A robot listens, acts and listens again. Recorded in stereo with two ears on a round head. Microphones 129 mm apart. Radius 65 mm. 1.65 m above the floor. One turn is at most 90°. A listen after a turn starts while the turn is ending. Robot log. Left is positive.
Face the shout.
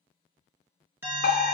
cmd idle
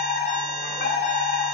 cmd idle
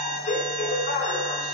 end: I can't make out a shout to turn to.